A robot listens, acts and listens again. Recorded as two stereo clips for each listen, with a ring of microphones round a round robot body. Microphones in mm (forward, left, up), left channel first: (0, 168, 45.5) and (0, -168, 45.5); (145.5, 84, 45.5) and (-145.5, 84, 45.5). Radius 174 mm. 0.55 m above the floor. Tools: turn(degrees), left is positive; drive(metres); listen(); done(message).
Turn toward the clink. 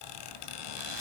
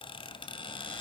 listen()
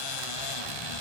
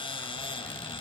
listen()
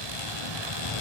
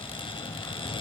done("I can't make out a clink to turn to.")